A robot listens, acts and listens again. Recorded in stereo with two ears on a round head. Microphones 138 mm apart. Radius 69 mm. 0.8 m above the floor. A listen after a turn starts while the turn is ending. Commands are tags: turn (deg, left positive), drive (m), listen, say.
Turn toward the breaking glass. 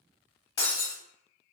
<turn deg="25"/>
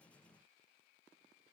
<listen/>
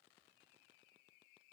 <say>I heard breaking glass, but can't make it out now. It was about straight ahead or 130° left.</say>